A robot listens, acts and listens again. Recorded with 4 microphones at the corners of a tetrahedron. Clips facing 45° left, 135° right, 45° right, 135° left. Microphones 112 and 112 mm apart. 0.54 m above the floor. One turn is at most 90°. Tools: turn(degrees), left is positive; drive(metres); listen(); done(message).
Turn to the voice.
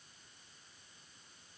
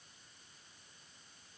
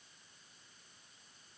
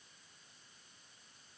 listen()
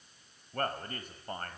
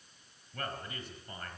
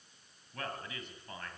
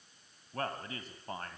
turn(degrees=85)
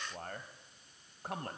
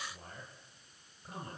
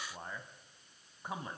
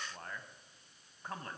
turn(degrees=35)
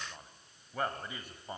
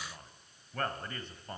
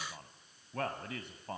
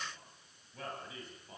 turn(degrees=-35)
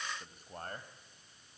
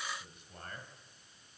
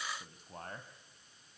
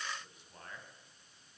done("Found it: a man speaking, straight ahead.")